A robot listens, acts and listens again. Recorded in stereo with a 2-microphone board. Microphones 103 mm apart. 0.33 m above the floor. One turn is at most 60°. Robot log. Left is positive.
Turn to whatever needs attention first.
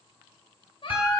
note: The baby crying: about 50° left or 130° left.
cmd yaw +50
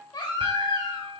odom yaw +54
note: So it is at 60° left.
cmd yaw +60
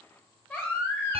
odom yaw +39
note: The baby crying is now 25° left.
cmd yaw +25
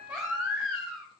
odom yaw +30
end: Facing the baby crying, 1 to 2 m away.